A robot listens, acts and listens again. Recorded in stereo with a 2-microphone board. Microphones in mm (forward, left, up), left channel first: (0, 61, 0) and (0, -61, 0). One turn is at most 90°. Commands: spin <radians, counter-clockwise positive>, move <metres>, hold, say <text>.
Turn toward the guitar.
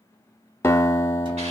spin 0.35
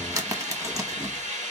hold
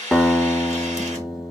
say Facing the guitar.